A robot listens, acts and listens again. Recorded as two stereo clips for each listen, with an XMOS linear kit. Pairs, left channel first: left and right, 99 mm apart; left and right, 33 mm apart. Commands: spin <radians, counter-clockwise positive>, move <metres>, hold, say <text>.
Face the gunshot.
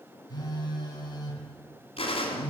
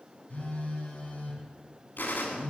spin 1.57
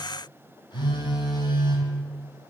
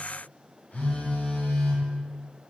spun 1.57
say Facing where the gunshot came from. I can't hear it now.